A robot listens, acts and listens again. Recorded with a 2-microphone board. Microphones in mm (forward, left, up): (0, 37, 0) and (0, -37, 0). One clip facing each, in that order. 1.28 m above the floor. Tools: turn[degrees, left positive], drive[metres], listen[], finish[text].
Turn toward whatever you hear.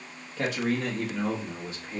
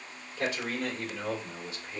Action: turn[90]
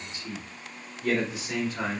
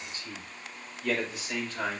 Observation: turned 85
Thought: So it is at 15° left.
Action: turn[15]
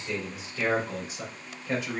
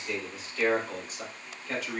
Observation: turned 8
Thought: The man speaking is now 10° left.
Action: turn[10]
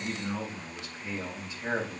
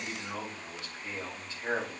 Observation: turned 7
Action: finish[Found it: a man speaking, straight ahead.]